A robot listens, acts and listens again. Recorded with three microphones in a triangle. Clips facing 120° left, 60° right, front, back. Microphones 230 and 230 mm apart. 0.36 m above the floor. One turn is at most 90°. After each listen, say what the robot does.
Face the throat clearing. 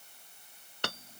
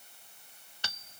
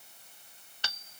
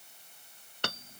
Keep listening.
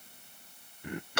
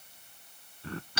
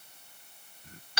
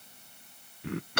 Turn 90° right.
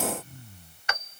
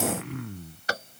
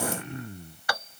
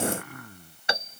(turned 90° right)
Turn 65° right.
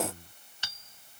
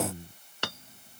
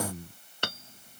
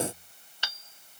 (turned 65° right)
Turn 10° left.
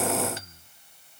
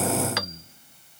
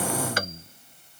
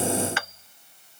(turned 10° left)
Facing the throat clearing.